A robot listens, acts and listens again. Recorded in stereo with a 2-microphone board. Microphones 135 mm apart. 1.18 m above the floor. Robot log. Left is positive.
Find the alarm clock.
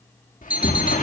cmd yaw -30
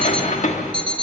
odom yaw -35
note: So it is at 135° right.
cmd yaw -135
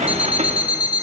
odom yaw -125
note: The alarm clock is now 10° right.
cmd yaw -10
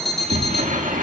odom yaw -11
end: Facing the alarm clock.